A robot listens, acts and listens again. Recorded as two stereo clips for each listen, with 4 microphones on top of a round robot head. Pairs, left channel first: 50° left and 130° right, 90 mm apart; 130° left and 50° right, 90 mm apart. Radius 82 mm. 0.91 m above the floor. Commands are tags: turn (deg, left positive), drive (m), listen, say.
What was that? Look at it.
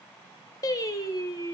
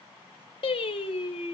<turn deg="105"/>
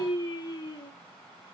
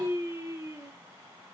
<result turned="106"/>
<turn deg="10"/>
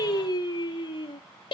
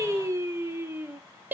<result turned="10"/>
<turn deg="20"/>
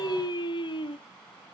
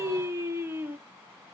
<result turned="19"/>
<turn deg="15"/>
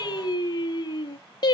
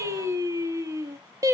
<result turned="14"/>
<say>Facing the singing, 1 to 2 m away.</say>